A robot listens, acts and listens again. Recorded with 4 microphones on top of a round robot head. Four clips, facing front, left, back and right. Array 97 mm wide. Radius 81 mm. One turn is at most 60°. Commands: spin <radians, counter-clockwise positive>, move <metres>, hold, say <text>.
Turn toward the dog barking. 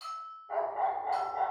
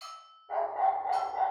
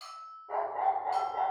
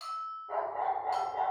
spin -1.05
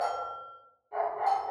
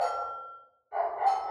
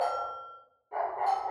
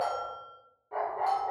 spin -1.05
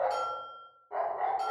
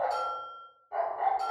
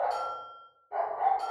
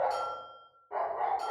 spin -0.87
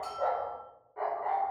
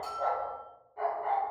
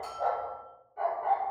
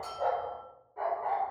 spin -0.17
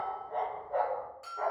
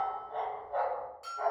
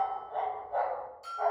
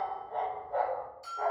say Facing the dog barking, 1 to 2 m away.